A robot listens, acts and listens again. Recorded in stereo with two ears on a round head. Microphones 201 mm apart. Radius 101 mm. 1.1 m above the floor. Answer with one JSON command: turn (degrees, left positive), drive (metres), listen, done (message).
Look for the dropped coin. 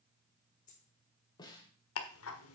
{"turn": 35}
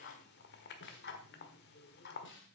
{"listen": true}
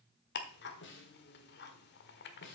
{"done": "I heard a dropped coin, but can't make it out now. It was about straight ahead or 110° left."}